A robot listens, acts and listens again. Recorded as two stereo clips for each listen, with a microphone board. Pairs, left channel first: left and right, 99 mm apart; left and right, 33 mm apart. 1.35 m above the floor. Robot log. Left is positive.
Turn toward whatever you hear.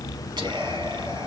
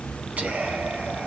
note: The whispering: about 50° right or 130° right.
cmd yaw -50
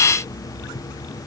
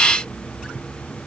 cmd idle
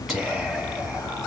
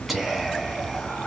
end: Facing the whispering, 2 to 4 m away.